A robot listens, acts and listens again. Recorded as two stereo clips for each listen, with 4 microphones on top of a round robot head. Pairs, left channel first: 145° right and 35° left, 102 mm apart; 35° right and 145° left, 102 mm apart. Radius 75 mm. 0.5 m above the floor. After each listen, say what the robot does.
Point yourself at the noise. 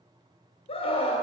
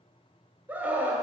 Turn 140° right.
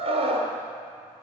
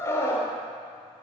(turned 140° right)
Turn 30° left.
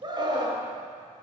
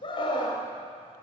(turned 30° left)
Found it: a scream, straight ahead.